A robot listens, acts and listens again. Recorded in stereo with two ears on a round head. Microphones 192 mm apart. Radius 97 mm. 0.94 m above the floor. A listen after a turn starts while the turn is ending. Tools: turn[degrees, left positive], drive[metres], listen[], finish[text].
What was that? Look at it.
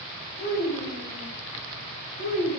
Thought: The child speaking: about 40° left or 140° left.
Action: turn[40]
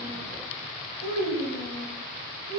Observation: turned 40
Thought: So it is at 110° left.
Action: turn[110]
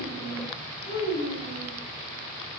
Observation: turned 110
Thought: The child speaking is now 35° left.
Action: turn[35]
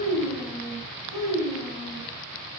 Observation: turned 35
Thought: The child speaking is now 10° right.
Action: turn[-10]
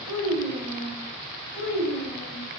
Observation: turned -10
Action: finish[Facing the child speaking.]